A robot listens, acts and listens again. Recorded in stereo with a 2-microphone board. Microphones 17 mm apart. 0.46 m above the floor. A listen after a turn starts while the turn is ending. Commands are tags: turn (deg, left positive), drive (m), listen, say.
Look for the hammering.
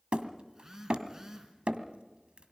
<turn deg="-65"/>
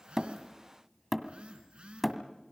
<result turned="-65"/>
<say>Facing the hammering, 1 to 2 m away.</say>